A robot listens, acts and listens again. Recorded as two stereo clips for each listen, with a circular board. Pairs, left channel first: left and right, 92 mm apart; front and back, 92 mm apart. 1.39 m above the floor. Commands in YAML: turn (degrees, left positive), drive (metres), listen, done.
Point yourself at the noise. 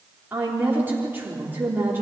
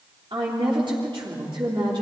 turn: -155
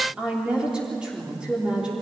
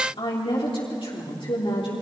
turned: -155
turn: -10
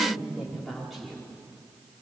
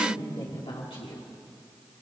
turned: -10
done: "Facing the woman speaking."